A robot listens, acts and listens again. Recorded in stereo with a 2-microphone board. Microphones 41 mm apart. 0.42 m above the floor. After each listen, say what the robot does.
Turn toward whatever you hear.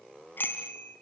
Turn 55° left.
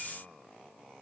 Keep listening.
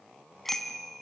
Found it: a bicycle bell, straight ahead.